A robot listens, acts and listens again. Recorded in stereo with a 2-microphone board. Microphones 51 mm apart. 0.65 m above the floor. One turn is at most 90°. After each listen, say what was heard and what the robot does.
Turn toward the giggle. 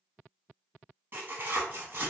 Keep listening.
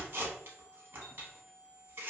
Keep listening.
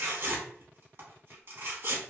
I can't make out a giggle to turn to.